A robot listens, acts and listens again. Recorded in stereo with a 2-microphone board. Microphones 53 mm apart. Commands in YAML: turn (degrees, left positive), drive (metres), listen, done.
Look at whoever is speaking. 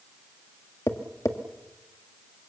listen: true
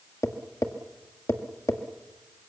listen: true
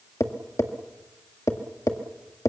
done: "I can't make out anyone speaking, only tapping."